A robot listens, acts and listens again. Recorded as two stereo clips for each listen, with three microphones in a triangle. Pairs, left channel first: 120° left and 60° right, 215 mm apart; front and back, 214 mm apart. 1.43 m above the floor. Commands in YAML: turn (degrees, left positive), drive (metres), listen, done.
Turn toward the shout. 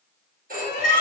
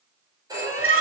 turn: 170
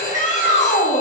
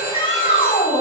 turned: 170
turn: 65
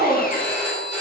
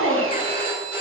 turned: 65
turn: -20
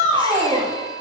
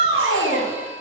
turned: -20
done: "Found it: a shout, straight ahead, 2 to 4 m away."